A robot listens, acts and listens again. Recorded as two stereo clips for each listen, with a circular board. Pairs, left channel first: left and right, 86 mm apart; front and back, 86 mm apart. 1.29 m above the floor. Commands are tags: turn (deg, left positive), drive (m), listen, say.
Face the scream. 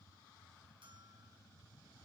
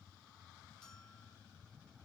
<listen/>
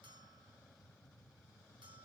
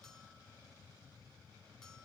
<listen/>
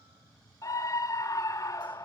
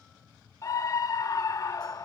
<turn deg="45"/>
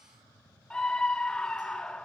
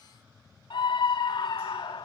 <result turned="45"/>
<turn deg="10"/>
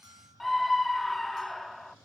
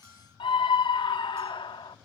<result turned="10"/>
<say>Facing the scream, 1 to 2 m away.</say>